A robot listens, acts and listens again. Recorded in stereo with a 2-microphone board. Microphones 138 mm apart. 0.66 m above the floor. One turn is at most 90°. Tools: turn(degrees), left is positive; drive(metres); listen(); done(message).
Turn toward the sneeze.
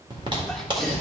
turn(degrees=30)
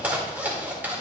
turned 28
listen()
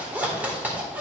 done("I heard a sneeze, but can't make it out now. It was about 25° right or 150° left.")